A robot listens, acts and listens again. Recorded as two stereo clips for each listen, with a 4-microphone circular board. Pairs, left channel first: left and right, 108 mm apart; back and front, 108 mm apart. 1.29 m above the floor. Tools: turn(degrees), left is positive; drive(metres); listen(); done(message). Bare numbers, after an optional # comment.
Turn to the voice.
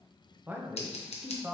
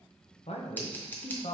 # The man speaking: 160° right.
turn(-160)
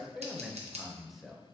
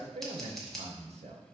done("Facing the man speaking, under 1 m away.")